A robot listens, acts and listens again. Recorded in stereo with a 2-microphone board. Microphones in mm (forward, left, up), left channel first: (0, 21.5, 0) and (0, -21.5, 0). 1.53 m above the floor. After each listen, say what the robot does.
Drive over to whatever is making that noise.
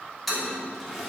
Turn 30° left.
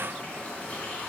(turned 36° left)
Turn 145° left.
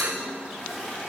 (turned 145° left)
Drive 1.0 m forward.
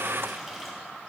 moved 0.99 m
Drive 1.0 m forward.
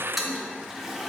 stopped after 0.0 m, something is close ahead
Arrived at the toilet flushing, straight ahead.